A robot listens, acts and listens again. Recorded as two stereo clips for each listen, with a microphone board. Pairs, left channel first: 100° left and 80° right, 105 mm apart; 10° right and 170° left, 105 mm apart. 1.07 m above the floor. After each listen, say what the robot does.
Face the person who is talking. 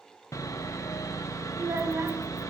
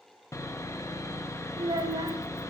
Turn 145° right.
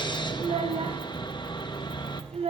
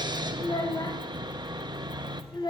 Turn 60° right.
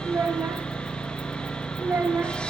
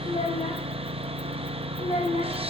Turn 10° right.
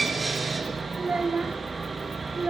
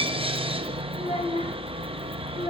Found it: a child speaking, straight ahead, under 1 m away.